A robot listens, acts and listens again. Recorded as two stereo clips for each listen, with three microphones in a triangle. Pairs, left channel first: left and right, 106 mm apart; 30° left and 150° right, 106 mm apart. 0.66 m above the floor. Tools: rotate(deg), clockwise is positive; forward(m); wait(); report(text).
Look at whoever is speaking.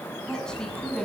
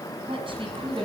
rotate(-175)
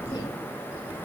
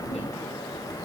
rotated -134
rotate(-40)
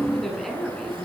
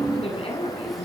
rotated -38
report("Found it: a woman speaking, straight ahead, over 4 m away.")